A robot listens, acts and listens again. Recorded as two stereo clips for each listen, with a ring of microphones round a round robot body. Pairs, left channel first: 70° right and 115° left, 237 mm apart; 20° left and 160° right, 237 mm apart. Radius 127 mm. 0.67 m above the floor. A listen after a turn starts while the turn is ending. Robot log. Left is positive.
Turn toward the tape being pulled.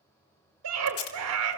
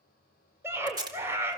note: The tape being pulled: 85° right.
cmd yaw -85
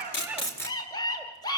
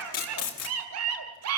note: The tape being pulled is now 10° left.
cmd yaw +10
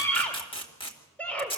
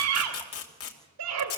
end: Facing the tape being pulled.